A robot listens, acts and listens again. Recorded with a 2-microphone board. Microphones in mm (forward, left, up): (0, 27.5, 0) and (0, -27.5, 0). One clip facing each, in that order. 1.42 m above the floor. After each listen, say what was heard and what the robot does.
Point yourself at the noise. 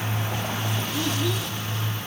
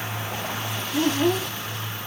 The child speaking: about 40° right or 140° right. Turn 40° right.
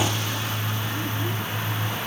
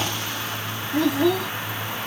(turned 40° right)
So it is at 100° right. Turn 100° right.
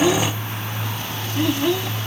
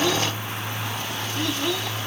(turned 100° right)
The child speaking is now 15° left. Turn 15° left.
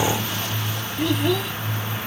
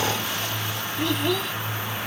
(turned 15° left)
Facing the child speaking.